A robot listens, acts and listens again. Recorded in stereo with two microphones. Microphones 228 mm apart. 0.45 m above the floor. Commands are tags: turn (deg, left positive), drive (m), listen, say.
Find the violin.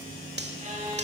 <turn deg="-30"/>
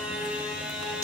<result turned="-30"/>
<say>Found it: a violin, straight ahead.</say>